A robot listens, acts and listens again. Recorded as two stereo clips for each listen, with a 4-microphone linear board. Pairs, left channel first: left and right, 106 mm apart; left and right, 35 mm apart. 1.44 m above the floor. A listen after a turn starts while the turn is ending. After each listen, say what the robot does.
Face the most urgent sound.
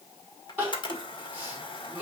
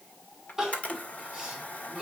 Turn 15° right.
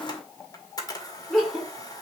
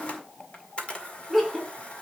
Found it: crying, straight ahead.